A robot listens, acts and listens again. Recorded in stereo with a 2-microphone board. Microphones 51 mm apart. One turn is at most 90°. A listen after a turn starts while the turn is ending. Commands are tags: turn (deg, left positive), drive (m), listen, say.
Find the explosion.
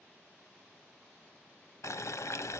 <listen/>
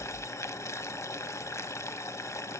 <listen/>
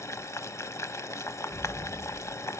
<turn deg="50"/>
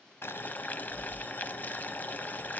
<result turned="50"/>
<listen/>
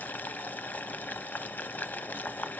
<say>I heard an explosion, but can't make it out now. It was about straight ahead or 80° left.</say>